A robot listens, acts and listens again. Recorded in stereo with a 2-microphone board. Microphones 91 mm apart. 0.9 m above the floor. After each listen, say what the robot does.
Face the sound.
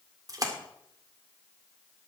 Turn 40° right.
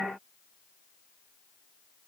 Keep listening.
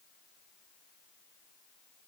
I heard a splash, but can't make it out now. It was about straight ahead or 100° right.